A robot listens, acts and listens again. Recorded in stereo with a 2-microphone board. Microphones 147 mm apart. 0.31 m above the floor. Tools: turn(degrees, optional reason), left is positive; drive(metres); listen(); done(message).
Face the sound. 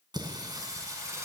turn(degrees=-20, reason="The singing: about 20° right or 160° right.")
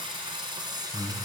turn(degrees=-25, reason="The singing: about 25° right or 155° right.")
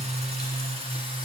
turn(degrees=-140, reason="So it is at 140° right.")
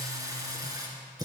turn(degrees=-30, reason="The singing is now 30° right.")
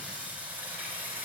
turn(degrees=-10, reason="The singing is now 10° right.")
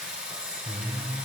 done("Facing the singing.")